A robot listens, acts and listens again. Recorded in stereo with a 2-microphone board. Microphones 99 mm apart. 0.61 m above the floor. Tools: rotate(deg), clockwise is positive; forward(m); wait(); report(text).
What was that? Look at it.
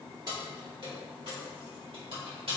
rotate(65)
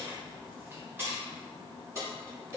rotate(35)
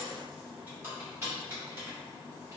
rotate(30)
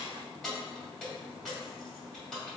report("Found it: keys jangling, straight ahead.")